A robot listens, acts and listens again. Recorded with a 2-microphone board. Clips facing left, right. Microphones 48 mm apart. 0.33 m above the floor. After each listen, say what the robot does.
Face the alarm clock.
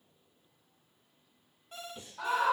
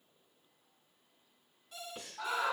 Turn 35° left.
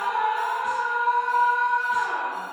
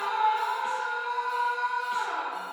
Keep listening.
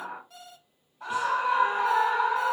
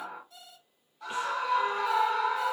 Turn 105° left.
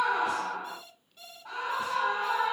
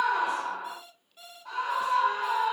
Turn 10° right.
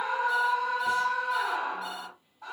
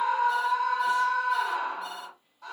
Keep listening.
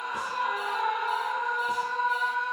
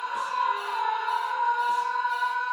Keep listening.
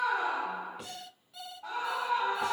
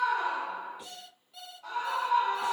Found it: an alarm clock, straight ahead, 1 to 2 m away.